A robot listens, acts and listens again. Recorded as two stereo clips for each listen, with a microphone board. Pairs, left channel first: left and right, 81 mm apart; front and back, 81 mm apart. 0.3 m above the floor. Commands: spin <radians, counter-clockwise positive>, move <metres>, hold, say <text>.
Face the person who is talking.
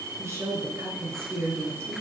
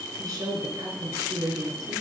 spin -2.62
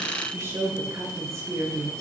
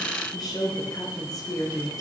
spin -0.70
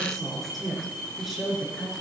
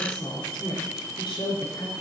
say Facing the woman speaking.